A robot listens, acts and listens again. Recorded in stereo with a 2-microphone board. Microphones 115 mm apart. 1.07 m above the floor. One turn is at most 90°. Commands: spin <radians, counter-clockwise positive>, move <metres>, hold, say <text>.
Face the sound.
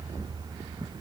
hold
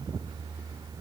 hold
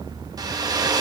spin -0.61
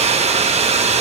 spin -1.57
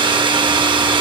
spin -0.79
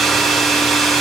say Facing the hair dryer, 1 to 2 m away.